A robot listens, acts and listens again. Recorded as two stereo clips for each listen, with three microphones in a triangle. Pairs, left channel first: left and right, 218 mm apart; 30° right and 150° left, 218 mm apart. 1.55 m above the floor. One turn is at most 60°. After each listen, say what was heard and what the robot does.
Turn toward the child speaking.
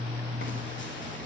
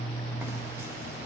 Keep listening.
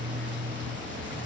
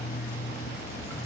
Keep listening.
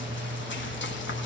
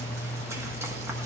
I can't make out a child speaking to turn to.